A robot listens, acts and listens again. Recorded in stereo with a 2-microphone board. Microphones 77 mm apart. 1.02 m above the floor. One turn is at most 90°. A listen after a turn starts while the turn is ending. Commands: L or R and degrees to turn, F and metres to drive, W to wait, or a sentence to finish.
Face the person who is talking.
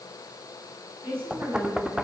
R30
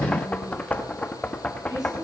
R90
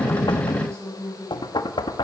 R40
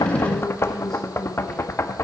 W
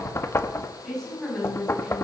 Found it: a woman speaking, straight ahead, over 4 m away.